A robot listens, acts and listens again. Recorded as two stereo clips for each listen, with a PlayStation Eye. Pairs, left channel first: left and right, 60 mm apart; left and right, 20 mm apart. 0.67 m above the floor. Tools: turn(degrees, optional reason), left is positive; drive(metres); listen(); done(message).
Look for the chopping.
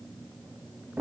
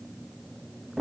listen()
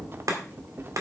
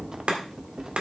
turn(degrees=-65, reason="The chopping: about 65° right or 115° right.")
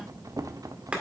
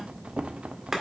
turn(degrees=-20, reason="So it is at 20° right.")
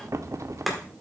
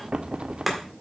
done("Facing the chopping.")